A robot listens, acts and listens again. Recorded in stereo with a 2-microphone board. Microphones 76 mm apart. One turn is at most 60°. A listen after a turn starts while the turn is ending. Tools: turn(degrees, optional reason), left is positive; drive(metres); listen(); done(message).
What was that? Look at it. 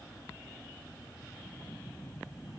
listen()
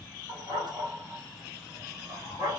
turn(degrees=-60, reason="The dog barking: about 70° right or 110° right.")
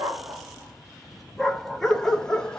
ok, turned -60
turn(degrees=10, reason="So it is at 10° left.")
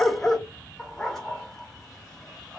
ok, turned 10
done("Found it: a dog barking, straight ahead.")